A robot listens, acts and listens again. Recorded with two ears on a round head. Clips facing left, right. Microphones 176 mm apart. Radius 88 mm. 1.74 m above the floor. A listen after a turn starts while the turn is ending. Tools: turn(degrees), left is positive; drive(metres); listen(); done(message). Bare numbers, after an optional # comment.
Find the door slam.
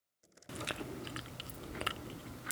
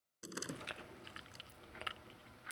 turn(-90)
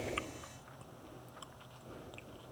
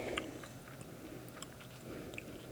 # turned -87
done("I heard a door slam from this way, but can't make it out now.")